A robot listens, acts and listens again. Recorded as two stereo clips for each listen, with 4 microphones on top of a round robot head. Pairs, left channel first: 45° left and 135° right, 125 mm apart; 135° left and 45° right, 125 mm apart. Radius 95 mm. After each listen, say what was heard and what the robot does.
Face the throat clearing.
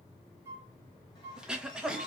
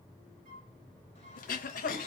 The throat clearing: 140° left. Turn 140° left.
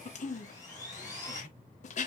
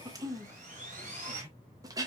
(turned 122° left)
The throat clearing is now 20° left. Turn 20° left.
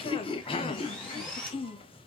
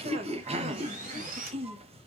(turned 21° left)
Facing the throat clearing, under 1 m away.